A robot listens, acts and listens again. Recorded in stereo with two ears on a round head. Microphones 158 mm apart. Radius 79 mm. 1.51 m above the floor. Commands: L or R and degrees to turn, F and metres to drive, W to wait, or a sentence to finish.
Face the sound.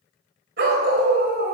R55
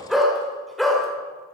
Facing the dog barking.